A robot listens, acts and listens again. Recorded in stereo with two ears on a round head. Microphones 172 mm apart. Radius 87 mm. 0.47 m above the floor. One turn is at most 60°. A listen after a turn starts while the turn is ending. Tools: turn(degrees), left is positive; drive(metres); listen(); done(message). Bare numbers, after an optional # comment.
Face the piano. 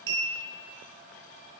listen()
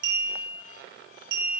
listen()
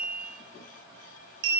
done("I can't make out a piano, only a clink.")